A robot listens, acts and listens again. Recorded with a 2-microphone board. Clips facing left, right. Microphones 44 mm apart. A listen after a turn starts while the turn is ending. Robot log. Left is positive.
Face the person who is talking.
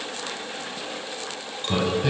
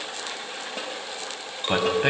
note: The man speaking: about 50° right or 130° right.
cmd yaw -50
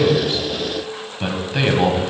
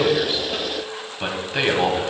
end: Found it: a man speaking, straight ahead.